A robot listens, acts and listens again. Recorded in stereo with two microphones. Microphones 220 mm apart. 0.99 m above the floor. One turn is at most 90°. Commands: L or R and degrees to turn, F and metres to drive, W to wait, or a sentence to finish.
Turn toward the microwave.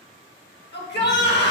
W
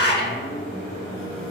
L65
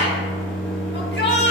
Found it: a microwave, straight ahead, 1 to 2 m away.